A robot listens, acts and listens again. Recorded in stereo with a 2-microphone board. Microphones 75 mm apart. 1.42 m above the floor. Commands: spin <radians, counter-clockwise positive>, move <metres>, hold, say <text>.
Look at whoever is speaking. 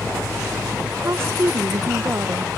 spin -0.61
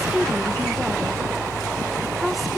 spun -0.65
say Facing the woman speaking.